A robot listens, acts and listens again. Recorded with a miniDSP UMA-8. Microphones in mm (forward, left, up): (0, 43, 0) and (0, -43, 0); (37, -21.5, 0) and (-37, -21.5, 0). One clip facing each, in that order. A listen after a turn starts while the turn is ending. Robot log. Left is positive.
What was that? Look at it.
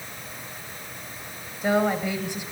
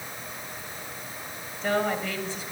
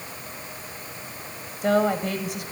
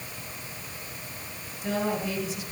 note: The woman speaking: 20° left.
cmd yaw +20
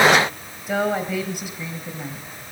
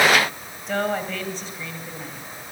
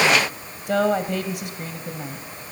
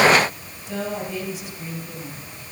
note: The woman speaking is now 20° left.
cmd yaw +20
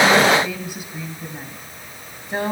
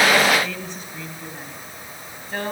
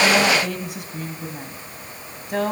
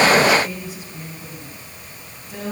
note: The woman speaking is now 20° left.
cmd yaw +20
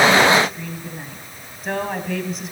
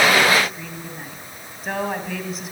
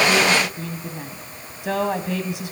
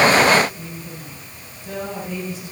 end: Found it: a woman speaking, straight ahead, 2 to 4 m away.